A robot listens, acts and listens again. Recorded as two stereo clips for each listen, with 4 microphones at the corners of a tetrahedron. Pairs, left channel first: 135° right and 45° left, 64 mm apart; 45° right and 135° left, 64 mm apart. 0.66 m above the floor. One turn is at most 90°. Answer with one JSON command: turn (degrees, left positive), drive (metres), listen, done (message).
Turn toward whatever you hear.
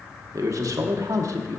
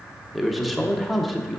{"turn": 45}
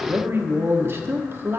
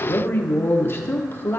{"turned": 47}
{"done": "Found it: a man speaking, straight ahead."}